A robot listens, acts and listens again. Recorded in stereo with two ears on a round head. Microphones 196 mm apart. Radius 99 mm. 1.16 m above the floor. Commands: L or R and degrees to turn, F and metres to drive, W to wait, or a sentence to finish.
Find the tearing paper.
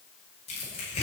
L30
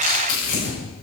L115
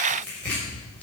Facing the tearing paper, over 4 m away.